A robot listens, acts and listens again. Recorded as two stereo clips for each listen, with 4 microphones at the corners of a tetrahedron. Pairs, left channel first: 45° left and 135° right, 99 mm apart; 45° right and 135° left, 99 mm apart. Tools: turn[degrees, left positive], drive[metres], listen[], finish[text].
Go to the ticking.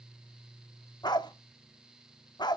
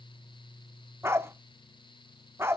Action: listen[]
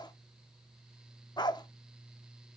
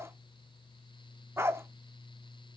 Action: listen[]
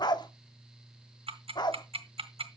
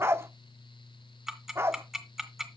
Thought: The ticking: 140° right.
Action: turn[-140]
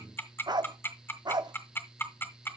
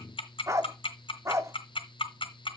Thought: The ticking is now 20° right.
Action: turn[-20]
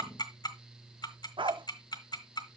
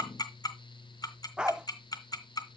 Action: drive[1.0]
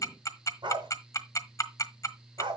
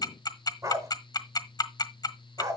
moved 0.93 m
Action: drive[1.0]
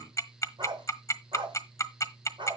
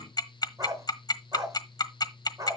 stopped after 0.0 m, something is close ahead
Action: finish[Arrived at the ticking, straight ahead.]